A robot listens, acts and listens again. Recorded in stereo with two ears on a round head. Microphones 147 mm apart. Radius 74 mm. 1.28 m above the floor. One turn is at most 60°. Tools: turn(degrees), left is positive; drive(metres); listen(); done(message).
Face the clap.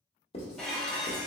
listen()
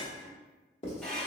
listen()
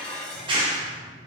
turn(degrees=-30)
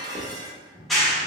done("Facing the clap, under 1 m away.")